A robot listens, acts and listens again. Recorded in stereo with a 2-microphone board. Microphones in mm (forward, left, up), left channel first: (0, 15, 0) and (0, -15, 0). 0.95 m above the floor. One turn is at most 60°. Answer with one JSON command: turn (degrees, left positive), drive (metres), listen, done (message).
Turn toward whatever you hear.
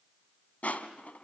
{"turn": 55}
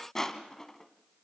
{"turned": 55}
{"turn": 15}
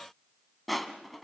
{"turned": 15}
{"done": "Found it: crushing, straight ahead."}